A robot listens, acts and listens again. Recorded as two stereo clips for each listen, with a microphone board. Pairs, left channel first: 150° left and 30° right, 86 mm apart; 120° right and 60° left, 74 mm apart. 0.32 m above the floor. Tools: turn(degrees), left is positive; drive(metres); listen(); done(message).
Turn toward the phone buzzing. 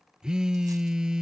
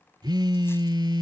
turn(degrees=50)
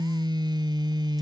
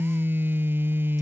done("Found it: a phone buzzing, straight ahead.")